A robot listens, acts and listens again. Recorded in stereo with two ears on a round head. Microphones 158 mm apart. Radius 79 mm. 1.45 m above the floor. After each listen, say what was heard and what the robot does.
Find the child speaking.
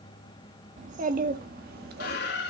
The child speaking: about 60° right or 120° right. Turn 60° right.
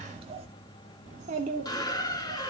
So it is at 45° right. Turn 45° right.
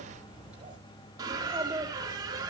The child speaking is now 10° right. Turn 10° right.
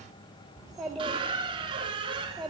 Found it: a child speaking, straight ahead.